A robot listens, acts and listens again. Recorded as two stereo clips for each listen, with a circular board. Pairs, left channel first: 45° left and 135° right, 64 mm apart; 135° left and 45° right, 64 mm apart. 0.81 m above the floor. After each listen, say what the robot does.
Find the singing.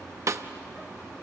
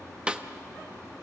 Keep listening.
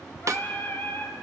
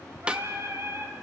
Facing the singing, 1 to 2 m away.